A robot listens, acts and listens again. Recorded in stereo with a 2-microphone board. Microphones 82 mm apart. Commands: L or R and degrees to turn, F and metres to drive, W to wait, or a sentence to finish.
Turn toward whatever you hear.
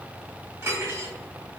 R30
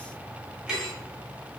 Found it: cutlery clinking, straight ahead, 1 to 2 m away.